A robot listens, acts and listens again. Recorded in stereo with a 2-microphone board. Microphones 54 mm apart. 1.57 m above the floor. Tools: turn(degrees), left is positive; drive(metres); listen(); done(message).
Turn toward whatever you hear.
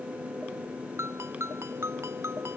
turn(degrees=-55)
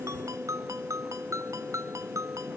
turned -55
turn(degrees=-70)
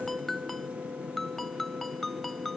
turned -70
done("Facing the ringtone.")